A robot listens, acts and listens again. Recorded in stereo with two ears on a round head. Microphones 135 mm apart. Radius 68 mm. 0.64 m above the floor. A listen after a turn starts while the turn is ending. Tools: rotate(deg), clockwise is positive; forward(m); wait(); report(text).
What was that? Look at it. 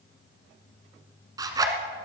rotate(25)
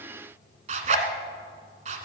rotate(130)
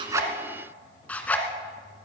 rotate(-10)
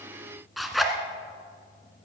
report("Facing the zipper.")